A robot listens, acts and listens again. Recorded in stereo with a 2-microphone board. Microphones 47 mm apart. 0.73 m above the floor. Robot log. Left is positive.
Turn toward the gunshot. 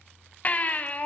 cmd idle
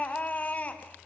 cmd idle
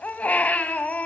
end: I can't make out a gunshot, only a baby crying.